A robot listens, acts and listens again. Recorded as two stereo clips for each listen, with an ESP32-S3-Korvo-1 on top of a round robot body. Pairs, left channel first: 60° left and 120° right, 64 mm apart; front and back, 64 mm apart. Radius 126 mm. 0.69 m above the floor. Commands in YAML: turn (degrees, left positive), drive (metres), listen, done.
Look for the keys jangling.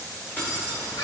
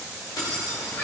done: "Found it: keys jangling, straight ahead."